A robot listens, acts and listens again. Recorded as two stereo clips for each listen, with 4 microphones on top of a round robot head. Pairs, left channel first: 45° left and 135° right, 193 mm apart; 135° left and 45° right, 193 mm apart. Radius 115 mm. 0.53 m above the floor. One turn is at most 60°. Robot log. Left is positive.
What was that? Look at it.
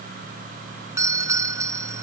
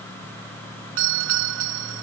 note: The doorbell: 60° right.
cmd yaw -60
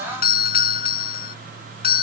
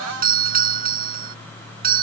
end: Facing the doorbell.